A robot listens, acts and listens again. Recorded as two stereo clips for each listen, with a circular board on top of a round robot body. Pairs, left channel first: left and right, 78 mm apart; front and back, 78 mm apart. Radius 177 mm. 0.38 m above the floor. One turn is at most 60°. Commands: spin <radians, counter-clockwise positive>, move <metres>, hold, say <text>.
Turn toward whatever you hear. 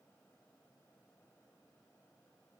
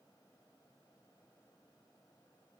hold
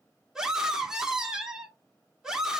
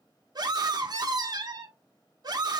spin -1.05
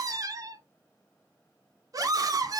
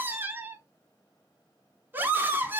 spin -1.05
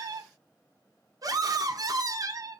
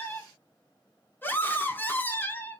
spin -1.05
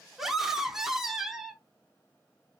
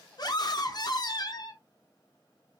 say Facing the scream.